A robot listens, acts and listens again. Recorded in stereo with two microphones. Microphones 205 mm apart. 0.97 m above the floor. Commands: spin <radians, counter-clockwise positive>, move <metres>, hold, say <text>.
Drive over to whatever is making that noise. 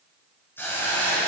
spin 0.52
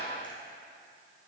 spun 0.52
hold
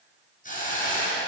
spin 2.36
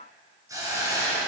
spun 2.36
spin -0.35
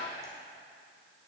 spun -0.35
hold
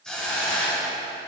move 1.0
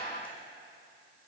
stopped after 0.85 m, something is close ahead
hold
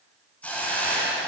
spin 0.17
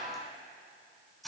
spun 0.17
say I am next to the hiss.